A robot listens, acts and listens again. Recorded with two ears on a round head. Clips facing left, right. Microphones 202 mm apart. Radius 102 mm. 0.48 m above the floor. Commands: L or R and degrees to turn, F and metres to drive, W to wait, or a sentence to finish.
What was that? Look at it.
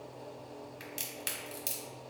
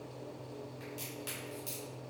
L35
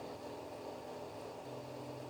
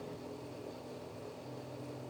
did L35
W
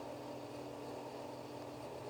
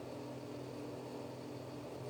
I heard a crack, but can't make it out now. It was about straight ahead or 110° left.